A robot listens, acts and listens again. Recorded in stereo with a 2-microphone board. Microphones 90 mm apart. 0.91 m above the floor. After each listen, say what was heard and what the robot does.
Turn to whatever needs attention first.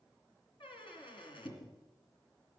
Keep listening.
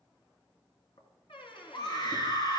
The scream: about 50° left or 130° left. Turn 50° left.
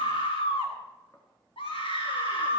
So it is at 80° left. Turn 80° left.
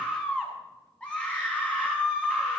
The scream is now 10° left. Turn 10° left.
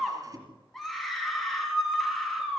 Facing the scream, over 4 m away.